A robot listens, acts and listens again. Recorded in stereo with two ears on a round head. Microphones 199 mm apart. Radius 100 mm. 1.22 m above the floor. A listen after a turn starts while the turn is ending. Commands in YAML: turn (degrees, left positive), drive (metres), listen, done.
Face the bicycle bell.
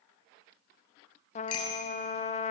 turn: 70
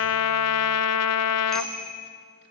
done: "Found it: a bicycle bell, straight ahead, over 4 m away."